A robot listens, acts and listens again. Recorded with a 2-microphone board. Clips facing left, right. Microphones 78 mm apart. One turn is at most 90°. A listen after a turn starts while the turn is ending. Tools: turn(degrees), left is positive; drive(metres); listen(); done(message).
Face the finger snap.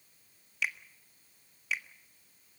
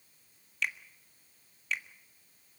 turn(degrees=30)
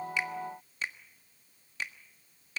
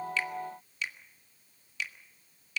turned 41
turn(degrees=90)
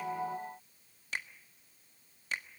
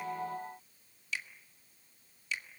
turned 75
turn(degrees=60)
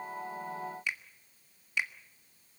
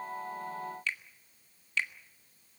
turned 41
turn(degrees=20)
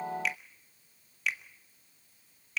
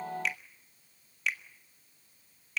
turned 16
done("Found it: a finger snap, straight ahead, 1 to 2 m away.")